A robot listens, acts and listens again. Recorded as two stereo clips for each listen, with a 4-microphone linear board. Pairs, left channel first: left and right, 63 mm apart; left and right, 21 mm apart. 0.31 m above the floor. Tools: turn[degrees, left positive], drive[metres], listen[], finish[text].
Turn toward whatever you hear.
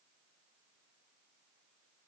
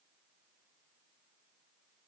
Action: listen[]
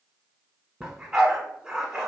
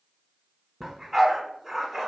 Action: turn[-30]
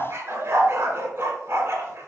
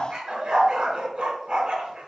Thought: So it is at 140° right.
Action: turn[-140]
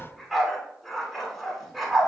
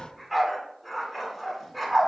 Action: finish[Found it: a dog barking, straight ahead.]